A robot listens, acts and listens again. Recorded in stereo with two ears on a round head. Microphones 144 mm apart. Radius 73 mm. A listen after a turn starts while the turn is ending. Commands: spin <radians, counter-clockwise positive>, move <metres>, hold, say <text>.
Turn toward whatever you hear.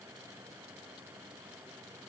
hold
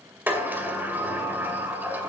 spin -0.52
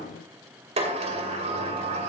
spin -2.36
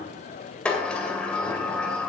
say Facing the sliding door, 2 to 4 m away.